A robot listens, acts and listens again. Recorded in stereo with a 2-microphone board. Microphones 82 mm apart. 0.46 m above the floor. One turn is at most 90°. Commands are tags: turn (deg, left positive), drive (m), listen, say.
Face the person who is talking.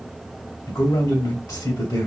<turn deg="50"/>
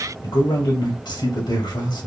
<turn deg="65"/>
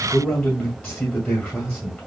<say>Found it: a man speaking, straight ahead.</say>